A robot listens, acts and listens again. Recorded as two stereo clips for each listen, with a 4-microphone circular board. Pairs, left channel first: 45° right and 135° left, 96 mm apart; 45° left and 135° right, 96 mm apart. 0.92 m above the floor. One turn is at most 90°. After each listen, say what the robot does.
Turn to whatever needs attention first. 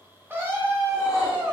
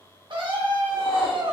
Turn 90° right.
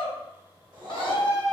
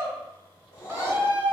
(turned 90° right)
Turn 75° right.
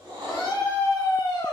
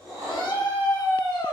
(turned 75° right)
Facing the scream.